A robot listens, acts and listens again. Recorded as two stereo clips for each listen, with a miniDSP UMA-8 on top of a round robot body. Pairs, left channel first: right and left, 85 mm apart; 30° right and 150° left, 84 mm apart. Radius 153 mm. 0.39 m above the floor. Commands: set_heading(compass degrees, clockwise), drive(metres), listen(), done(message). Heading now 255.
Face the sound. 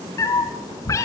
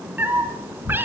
set_heading(40)
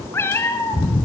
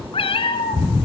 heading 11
set_heading(41)
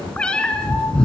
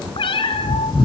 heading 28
set_heading(38)
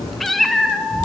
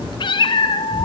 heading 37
done("Facing the cat meowing, 2 to 4 m away.")